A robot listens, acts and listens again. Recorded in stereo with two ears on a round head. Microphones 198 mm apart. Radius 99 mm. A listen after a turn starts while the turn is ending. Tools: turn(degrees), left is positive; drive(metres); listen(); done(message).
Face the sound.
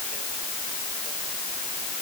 listen()
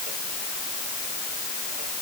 listen()
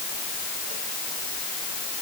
done("I can't make out anything to turn to.")